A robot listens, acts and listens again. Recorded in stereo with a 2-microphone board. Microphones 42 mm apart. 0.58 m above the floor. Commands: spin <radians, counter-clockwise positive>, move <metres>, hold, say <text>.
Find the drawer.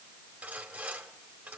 hold
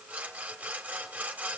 hold
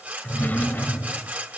spin 0.79
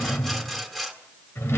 spin 1.66
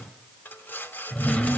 spin 0.61
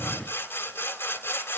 hold
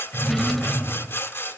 say Found it: a drawer, straight ahead, 1 to 2 m away.